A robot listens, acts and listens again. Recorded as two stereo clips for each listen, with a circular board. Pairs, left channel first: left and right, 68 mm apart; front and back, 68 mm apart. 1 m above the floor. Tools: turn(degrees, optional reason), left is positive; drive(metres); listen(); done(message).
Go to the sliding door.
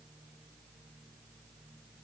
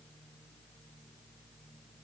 listen()
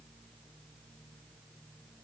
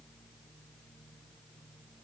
listen()
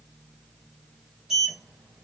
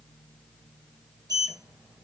turn(degrees=-175, reason="The sliding door: 175° right.")
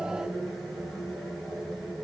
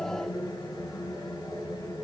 drive(metres=1.0)
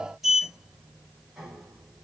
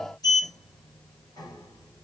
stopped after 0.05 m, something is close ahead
done("Blocked. The sliding door is further on, straight ahead.")